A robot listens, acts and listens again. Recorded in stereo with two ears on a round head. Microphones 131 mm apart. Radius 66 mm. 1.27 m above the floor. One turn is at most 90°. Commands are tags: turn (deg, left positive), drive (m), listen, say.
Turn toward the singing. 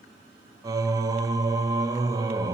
<turn deg="-25"/>
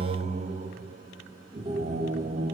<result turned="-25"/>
<turn deg="-90"/>
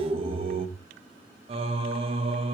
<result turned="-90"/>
<turn deg="-40"/>
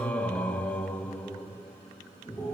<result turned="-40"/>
<turn deg="10"/>
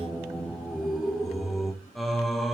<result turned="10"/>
<say>Facing the singing, 1 to 2 m away.</say>